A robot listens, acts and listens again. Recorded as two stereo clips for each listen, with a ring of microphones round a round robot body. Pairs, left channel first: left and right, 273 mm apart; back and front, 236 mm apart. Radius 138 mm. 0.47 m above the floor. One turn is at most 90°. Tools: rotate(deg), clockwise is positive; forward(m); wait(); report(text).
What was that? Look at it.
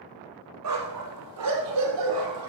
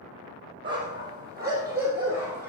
rotate(85)
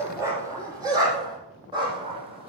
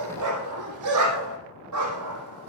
rotate(20)
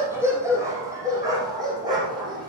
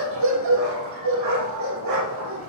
rotate(15)
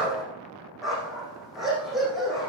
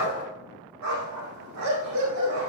report("Found it: a dog barking, straight ahead.")